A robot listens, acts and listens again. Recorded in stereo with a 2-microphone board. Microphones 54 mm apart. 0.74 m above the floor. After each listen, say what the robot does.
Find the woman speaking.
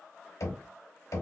Keep listening.
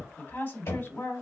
Turn 40° left.
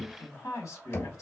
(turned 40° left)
Turn 100° left.
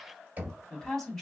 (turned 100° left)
Turn 10° left.
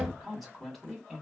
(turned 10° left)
Facing the woman speaking, 1 to 2 m away.